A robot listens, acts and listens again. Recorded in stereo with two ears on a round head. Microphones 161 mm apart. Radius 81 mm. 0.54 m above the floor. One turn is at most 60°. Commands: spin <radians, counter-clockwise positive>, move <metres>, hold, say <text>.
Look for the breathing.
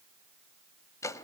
hold
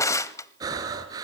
spin -0.35
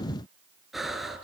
say Found it: breathing, straight ahead, 2 to 4 m away.